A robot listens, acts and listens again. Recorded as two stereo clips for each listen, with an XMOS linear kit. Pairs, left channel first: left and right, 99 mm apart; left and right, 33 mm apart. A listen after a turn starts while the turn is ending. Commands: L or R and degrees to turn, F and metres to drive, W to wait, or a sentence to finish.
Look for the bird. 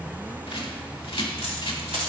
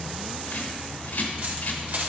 L65
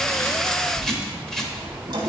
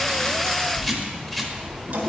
Facing the bird.